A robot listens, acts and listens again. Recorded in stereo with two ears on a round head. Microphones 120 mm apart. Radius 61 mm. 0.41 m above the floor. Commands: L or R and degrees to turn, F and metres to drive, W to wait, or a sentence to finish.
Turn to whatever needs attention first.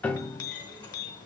W
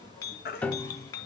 L90
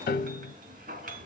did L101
R10
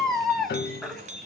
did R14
Facing the baby crying.